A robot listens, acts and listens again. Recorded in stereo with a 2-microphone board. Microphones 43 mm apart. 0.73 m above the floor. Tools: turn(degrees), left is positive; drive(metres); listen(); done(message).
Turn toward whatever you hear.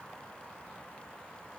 listen()
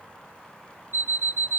turn(degrees=-60)
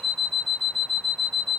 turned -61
done("Found it: an alarm clock, straight ahead, 1 to 2 m away.")